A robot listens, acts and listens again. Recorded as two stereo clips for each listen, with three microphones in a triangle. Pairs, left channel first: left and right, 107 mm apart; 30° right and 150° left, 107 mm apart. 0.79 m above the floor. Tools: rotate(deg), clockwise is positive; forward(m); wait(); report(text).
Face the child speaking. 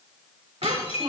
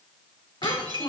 rotate(70)
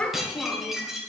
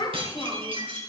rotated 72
rotate(-15)
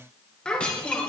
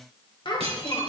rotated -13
rotate(-10)
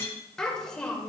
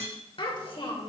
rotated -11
rotate(-10)
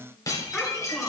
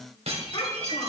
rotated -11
report("Found it: a child speaking, straight ahead, 2 to 4 m away.")